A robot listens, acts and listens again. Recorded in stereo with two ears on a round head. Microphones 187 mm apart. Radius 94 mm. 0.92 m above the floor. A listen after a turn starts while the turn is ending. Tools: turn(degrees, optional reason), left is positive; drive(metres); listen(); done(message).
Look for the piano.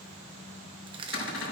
listen()
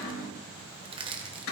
listen()
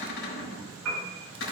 turn(degrees=-90)
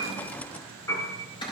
turn(degrees=15, reason="So it is at 15° left.")
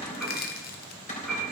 done("Found it: a piano, straight ahead, over 4 m away.")